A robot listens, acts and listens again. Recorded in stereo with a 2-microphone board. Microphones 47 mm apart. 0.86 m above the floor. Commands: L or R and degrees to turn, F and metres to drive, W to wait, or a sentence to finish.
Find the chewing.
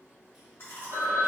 L60
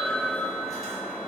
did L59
W
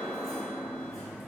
W
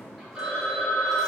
I heard chewing, but can't make it out now. It was about straight ahead or 60° left.